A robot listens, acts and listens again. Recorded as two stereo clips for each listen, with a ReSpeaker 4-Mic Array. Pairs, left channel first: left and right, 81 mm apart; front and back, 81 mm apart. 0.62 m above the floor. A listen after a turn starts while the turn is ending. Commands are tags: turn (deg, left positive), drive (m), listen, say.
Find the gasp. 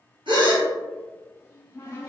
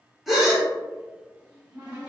<turn deg="-90"/>
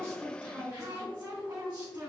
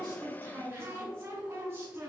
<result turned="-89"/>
<say>Facing where the gasp came from. I can't hear it now.</say>